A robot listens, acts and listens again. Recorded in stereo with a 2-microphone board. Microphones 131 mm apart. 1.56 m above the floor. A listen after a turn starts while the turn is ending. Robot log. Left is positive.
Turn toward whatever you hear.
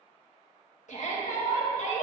note: The shout: about 75° left or 105° left.
cmd yaw +75
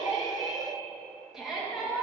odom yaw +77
end: Facing the shout, 2 to 4 m away.